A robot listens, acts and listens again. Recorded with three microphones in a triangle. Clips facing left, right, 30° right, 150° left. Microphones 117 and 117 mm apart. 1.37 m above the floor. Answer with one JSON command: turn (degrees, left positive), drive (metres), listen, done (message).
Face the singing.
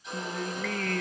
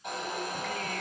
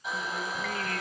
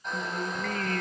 {"turn": 115}
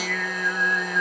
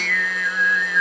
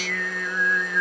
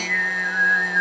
{"turn": 30}
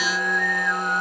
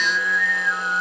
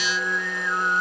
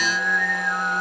{"turn": 35}
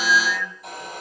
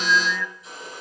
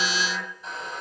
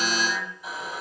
{"turn": -10}
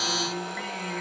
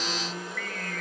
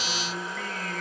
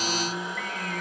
{"turn": 15}
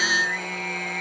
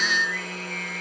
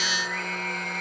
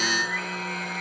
{"done": "Facing the singing, 2 to 4 m away."}